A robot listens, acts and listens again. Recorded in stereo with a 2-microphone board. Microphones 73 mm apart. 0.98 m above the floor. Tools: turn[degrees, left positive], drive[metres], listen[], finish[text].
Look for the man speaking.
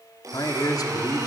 Thought: The man speaking: about 55° left or 125° left.
Action: turn[55]
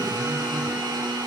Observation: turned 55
Action: listen[]
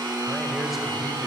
Action: listen[]
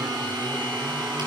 Action: finish[I heard a man speaking, but can't make it out now. It was about straight ahead or 70° left.]